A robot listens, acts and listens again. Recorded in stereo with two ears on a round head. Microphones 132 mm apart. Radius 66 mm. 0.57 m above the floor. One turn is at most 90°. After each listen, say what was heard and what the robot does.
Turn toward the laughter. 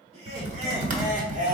The laughter: about 55° right or 125° right. Turn 55° right.
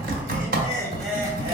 So it is at 25° right. Turn 25° right.
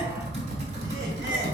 Keep listening.
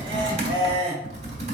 The laughter is now 35° right. Turn 35° right.
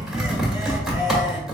Keep listening.
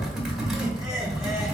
Keep listening.
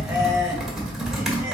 I heard laughter from this way, but can't make it out now.